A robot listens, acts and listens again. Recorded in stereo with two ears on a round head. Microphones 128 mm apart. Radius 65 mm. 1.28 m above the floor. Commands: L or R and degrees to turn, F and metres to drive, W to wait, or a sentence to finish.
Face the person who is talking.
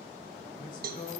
L65
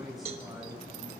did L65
Found it: a man speaking, straight ahead, over 4 m away.